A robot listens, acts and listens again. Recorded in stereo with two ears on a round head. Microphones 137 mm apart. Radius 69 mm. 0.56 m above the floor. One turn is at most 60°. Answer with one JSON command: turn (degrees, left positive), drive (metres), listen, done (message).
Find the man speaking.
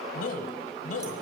{"turn": 60}
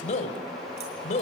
{"turn": 50}
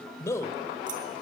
{"turn": 20}
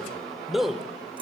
{"done": "Found it: a man speaking, straight ahead."}